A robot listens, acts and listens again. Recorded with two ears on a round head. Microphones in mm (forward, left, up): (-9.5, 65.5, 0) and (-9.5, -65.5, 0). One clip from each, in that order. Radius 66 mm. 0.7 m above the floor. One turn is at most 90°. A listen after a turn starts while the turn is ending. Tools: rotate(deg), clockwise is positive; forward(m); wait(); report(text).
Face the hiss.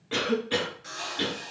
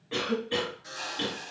rotate(40)
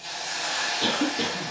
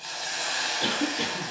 rotate(90)
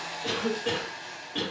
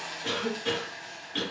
report("Found it: a hiss, straight ahead, 1 to 2 m away.")